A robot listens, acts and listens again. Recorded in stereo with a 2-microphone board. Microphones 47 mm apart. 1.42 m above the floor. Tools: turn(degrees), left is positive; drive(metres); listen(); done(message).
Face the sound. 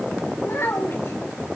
turn(degrees=60)
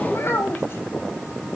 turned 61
turn(degrees=55)
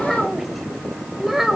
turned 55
done("Facing the child speaking.")